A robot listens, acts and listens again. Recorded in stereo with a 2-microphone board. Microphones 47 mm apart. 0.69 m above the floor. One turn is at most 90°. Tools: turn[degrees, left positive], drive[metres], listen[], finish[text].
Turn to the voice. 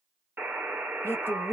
Thought: The woman speaking: about 55° left or 125° left.
Action: turn[55]
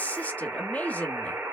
Thought: So it is at 40° left.
Action: turn[40]
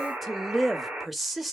Action: finish[Found it: a woman speaking, straight ahead.]